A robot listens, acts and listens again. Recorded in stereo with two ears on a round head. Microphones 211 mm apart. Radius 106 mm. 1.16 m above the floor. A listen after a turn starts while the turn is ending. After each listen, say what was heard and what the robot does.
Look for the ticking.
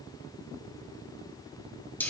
Keep listening.
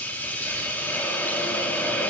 Keep listening.
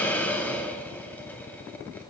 I can't make out ticking, only a hiss.